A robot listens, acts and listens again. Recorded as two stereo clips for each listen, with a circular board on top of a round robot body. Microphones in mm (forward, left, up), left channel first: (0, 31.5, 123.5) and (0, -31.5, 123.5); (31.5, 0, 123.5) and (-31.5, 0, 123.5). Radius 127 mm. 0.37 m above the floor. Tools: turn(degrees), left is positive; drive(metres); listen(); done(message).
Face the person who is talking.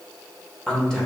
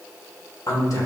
turn(degrees=10)
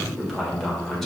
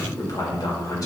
done("Found it: a man speaking, straight ahead.")